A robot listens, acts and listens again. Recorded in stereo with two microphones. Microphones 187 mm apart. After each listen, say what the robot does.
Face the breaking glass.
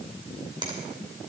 Keep listening.
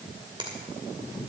Keep listening.
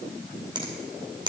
I can't make out breaking glass to turn to.